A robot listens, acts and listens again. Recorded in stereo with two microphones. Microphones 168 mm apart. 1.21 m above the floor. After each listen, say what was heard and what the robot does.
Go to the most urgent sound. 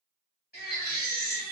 The baby crying: about 70° left or 110° left. Turn 70° left.
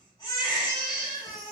So it is at 20° left. Turn 20° left.
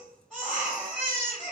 Drive 1.0 m forward.
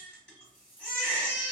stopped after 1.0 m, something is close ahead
Arrived at the baby crying, straight ahead.